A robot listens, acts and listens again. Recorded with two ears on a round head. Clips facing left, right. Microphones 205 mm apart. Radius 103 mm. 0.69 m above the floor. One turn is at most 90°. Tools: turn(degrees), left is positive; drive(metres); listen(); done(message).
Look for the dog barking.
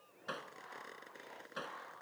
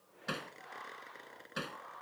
listen()
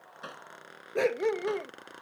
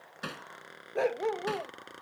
turn(degrees=30)
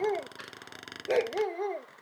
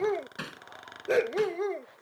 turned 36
turn(degrees=-20)
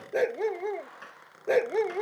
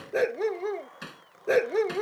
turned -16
turn(degrees=-10)
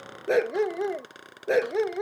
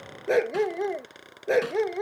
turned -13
done("Facing the dog barking.")